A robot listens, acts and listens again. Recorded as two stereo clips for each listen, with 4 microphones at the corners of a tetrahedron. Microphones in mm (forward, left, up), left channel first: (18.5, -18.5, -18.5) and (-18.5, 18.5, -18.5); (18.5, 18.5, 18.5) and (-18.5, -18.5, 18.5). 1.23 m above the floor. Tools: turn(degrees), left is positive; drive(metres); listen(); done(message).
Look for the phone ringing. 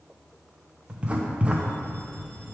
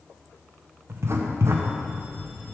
listen()
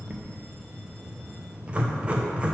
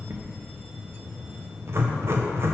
listen()
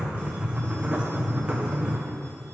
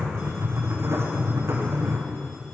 done("I can't make out a phone ringing, only writing.")